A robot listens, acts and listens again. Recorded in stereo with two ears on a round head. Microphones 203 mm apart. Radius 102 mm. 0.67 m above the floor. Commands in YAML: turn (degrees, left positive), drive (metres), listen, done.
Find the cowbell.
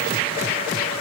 listen: true
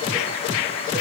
listen: true
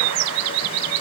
done: "I can't make out a cowbell."